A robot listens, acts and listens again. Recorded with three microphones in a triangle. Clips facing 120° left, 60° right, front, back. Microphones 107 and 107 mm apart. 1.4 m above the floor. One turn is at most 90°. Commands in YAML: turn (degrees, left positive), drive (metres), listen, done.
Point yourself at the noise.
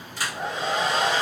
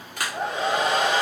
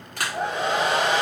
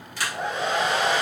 turn: -30
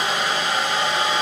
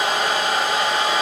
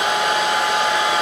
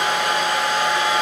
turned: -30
turn: -20
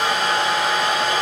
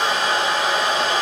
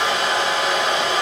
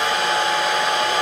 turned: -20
done: "Facing the hair dryer, under 1 m away."